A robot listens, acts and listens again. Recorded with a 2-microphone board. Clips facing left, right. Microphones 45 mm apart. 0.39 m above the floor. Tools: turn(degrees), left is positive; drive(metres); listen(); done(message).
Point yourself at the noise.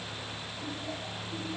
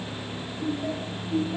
turn(degrees=-90)
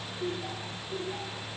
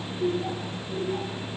done("Found it: laughter, straight ahead, over 4 m away.")